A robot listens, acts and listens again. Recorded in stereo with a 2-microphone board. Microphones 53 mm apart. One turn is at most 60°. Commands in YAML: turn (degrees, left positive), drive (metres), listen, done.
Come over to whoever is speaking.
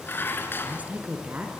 turn: -30
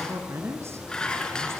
turn: -60
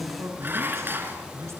turn: -60
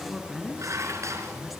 drive: 1.0
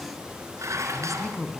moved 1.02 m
drive: 1.0
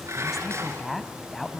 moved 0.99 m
drive: 1.0
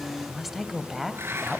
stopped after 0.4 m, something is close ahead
done: "I am next to the woman speaking."